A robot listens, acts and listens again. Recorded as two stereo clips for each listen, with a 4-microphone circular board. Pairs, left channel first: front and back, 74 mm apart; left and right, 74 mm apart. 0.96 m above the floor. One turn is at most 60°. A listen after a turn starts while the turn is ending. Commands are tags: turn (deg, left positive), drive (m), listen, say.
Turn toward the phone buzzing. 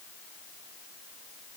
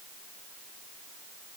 <listen/>
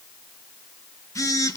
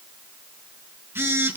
<turn deg="-35"/>
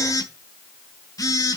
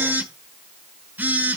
<turn deg="-30"/>
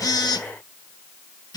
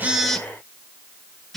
<say>Found it: a phone buzzing, straight ahead, 1 to 2 m away.</say>